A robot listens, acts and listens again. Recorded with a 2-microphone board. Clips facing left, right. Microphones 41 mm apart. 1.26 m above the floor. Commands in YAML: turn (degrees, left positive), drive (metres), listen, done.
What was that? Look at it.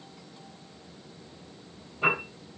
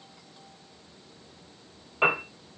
turn: -90
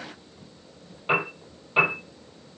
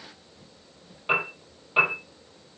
done: "Facing the piano, over 4 m away."